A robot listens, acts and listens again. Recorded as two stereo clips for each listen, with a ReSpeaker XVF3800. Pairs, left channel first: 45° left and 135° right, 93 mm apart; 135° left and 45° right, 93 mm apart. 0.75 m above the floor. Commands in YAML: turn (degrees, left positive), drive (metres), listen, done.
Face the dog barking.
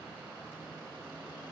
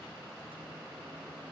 listen: true
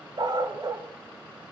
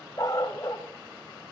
turn: 180
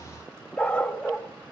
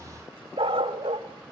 turn: -40
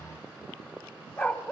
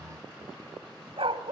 turn: -30
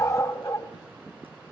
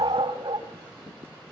turn: -10
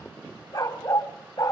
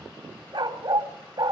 done: "Facing the dog barking, 1 to 2 m away."